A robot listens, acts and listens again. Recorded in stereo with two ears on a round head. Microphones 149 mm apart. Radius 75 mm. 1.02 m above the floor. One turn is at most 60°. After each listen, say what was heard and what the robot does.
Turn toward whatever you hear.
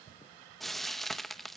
Turn 30° left.
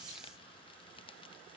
Keep listening.
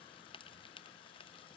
So it is at 145° left. Turn 60° left.
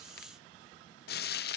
The frying is now 110° left. Turn 60° left.
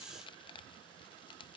The frying is now 30° left. Turn 30° left.
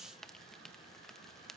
Found it: frying, straight ahead.